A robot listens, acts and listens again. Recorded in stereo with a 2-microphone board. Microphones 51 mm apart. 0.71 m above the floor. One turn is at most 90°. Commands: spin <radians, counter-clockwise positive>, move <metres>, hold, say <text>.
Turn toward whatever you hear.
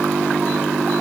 hold
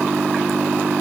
hold
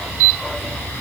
say I can't make out anything.